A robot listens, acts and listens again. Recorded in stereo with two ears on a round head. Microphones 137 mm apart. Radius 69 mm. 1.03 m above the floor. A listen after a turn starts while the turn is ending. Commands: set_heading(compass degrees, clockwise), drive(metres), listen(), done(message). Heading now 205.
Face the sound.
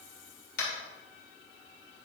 set_heading(145)
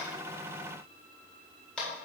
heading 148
done("Facing the tapping.")